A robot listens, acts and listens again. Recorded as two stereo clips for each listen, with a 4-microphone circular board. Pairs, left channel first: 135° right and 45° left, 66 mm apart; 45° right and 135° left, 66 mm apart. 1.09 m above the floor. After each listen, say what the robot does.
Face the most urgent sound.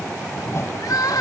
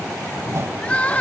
Turn 115° right.
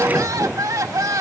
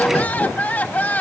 Turn 20° left.
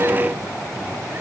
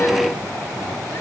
Keep listening.
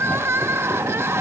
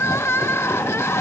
Found it: crying, straight ahead.